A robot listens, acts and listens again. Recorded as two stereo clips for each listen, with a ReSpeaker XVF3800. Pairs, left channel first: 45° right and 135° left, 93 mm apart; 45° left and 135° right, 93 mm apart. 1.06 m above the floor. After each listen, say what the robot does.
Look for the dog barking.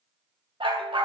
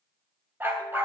Turn 160° left.
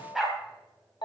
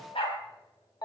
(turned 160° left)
Turn 50° left.
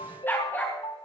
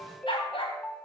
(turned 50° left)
Turn 25° left.
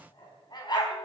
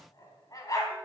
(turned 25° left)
Facing the dog barking, over 4 m away.